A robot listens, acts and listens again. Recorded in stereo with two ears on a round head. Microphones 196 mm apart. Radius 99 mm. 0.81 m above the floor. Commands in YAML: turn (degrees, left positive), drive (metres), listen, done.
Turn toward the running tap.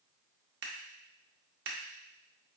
listen: true
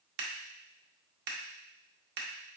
listen: true
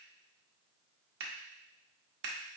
done: "I can't make out a running tap, only scissors."